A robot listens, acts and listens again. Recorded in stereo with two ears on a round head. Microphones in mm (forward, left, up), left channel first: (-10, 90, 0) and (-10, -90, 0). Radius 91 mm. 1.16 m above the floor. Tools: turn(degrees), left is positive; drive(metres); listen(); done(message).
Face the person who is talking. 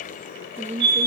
turn(degrees=-35)
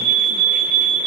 listen()
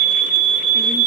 listen()
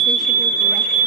done("I heard a woman speaking, but can't make it out now. It was about straight ahead or 110° right.")